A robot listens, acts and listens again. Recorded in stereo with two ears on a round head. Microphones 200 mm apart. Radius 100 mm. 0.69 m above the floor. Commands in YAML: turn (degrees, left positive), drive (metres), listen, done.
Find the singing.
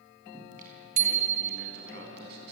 turn: -50
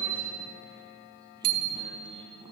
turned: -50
turn: -25
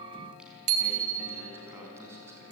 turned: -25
turn: -10
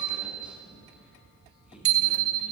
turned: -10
listen: true
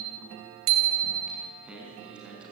done: "Found it: singing, straight ahead."